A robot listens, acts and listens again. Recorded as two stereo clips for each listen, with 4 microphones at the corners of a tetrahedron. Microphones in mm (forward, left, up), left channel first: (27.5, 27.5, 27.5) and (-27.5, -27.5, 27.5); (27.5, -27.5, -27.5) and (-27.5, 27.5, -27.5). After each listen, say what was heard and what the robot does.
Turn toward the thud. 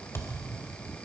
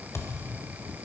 Found it: a thud, straight ahead, 1 to 2 m away.